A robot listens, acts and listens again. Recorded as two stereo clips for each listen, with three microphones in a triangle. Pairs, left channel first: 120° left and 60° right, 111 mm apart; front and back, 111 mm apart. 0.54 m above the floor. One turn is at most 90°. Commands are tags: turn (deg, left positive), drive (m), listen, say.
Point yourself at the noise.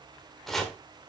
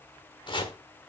<turn deg="35"/>
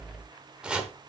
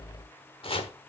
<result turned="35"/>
<turn deg="20"/>
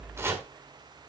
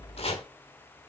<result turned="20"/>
<say>Facing the chopping.</say>